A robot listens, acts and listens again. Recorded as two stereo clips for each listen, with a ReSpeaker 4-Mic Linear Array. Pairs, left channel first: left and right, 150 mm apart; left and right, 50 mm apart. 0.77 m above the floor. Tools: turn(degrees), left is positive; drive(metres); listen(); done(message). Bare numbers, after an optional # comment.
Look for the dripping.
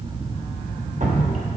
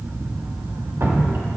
# The dripping: about 50° right or 130° right.
turn(-50)
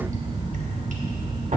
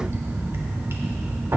# So it is at 65° right.
turn(-65)
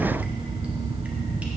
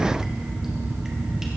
listen()
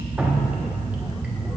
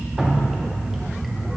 # The dripping is now 10° right.
turn(-10)
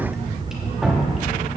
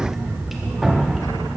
done("Facing the dripping, 1 to 2 m away.")